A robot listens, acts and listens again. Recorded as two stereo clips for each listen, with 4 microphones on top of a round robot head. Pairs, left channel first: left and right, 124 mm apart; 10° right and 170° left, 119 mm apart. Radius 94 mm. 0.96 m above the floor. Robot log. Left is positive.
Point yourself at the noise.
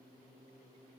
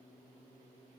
cmd idle
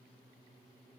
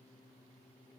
cmd idle
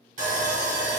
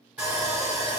note: The sawing: 105° right.
cmd yaw -105
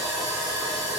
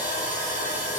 end: Facing the sawing.